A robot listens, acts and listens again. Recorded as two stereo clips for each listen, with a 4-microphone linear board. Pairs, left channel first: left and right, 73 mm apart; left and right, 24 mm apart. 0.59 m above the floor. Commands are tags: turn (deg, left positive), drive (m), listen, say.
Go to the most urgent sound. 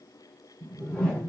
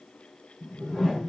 <listen/>
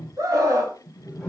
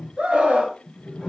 <turn deg="-50"/>
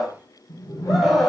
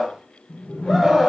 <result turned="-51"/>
<drive m="1.0"/>
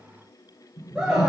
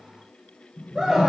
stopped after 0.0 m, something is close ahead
<turn deg="-10"/>
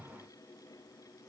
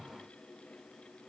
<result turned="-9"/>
<listen/>
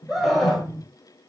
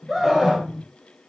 <say>Something is in my way. I am facing the scream but have not reached it.</say>